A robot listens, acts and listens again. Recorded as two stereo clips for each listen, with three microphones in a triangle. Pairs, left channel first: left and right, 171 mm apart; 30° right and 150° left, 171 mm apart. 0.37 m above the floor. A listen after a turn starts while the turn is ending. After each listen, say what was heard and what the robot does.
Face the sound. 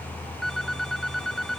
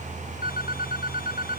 Found it: a phone ringing, straight ahead.